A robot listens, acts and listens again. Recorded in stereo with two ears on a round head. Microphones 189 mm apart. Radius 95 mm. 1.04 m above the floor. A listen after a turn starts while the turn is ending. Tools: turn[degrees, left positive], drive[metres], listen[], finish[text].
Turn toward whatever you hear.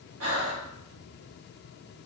Thought: The breathing: about 75° right or 105° right.
Action: turn[-75]
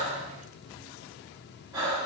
Thought: So it is at 20° right.
Action: turn[-20]
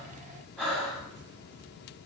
Action: finish[Facing the breathing, 1 to 2 m away.]